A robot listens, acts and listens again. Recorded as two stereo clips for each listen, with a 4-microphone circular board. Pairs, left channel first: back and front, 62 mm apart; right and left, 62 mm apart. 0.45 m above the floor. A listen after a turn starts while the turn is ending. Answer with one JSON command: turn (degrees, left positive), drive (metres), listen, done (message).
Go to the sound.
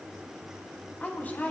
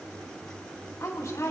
{"turn": -120}
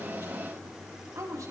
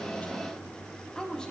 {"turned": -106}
{"turn": -15}
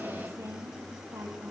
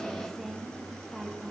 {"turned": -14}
{"drive": 1.0}
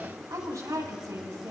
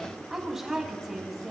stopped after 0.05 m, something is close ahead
{"turn": 10}
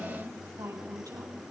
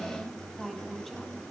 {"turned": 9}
{"done": "Blocked. The woman speaking is further on, straight ahead."}